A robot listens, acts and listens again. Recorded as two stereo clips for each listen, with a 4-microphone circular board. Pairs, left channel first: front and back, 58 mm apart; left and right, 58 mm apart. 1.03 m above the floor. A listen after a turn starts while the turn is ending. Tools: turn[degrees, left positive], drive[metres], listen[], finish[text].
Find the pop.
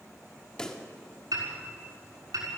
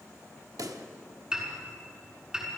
Thought: The pop: 75° right.
Action: turn[-75]
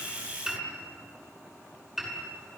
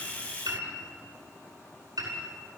Action: finish[Facing where the pop came from. I can't hear it now.]